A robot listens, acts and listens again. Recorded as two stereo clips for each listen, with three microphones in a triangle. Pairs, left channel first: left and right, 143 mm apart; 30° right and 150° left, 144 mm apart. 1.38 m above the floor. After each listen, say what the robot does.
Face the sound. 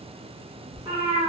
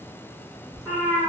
Turn 155° right.
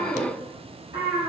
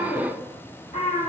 Turn 50° right.
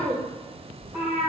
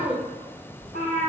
Found it: a cat meowing, straight ahead, 2 to 4 m away.